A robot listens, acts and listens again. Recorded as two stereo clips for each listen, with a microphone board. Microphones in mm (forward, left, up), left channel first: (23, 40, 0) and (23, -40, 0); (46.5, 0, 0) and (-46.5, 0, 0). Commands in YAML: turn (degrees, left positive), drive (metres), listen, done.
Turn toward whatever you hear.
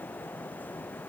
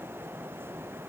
listen: true
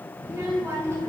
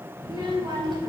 turn: -145
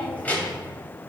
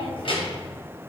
turn: 20
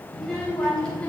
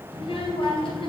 turn: 10
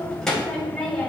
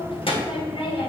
turn: 10
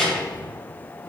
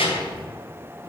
done: "Facing the child speaking, 2 to 4 m away."